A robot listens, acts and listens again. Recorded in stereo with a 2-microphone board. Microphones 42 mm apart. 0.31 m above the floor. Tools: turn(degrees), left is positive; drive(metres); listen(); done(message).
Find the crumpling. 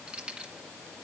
listen()
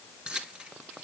listen()
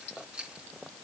done("I can't make out crumpling to turn to.")